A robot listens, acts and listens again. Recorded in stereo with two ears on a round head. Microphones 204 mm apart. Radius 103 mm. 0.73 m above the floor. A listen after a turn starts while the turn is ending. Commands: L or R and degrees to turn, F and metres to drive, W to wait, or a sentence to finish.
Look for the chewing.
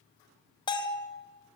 W
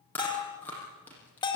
L30
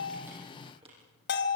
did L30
W
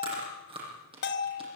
R20
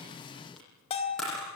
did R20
Found it: chewing, straight ahead.